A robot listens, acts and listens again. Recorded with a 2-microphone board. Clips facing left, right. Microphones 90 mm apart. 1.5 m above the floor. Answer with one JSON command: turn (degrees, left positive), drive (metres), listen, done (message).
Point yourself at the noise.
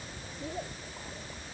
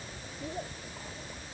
{"listen": true}
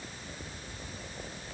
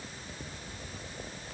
{"listen": true}
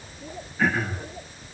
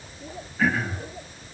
{"turn": 30}
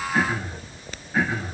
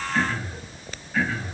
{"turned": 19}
{"turn": 165}
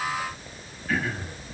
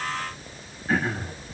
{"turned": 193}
{"turn": -30}
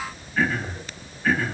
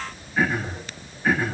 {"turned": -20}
{"turn": -10}
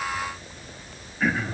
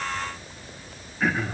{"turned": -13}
{"done": "Found it: throat clearing, straight ahead."}